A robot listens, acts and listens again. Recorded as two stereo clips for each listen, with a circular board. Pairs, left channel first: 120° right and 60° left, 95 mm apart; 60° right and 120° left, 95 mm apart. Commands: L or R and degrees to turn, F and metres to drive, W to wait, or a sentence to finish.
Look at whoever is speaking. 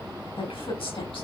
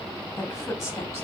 R120
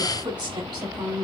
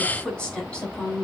L20
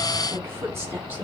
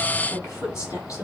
Found it: a woman speaking, straight ahead, over 4 m away.